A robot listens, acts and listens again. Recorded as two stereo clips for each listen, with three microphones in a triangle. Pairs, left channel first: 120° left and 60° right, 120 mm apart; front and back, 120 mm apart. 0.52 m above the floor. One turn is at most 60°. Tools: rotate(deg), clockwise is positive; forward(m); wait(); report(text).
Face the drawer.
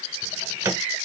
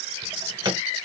rotate(60)
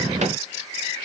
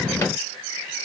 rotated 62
rotate(60)
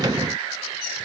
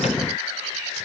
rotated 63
wait()
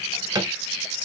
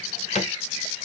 report("Facing the drawer.")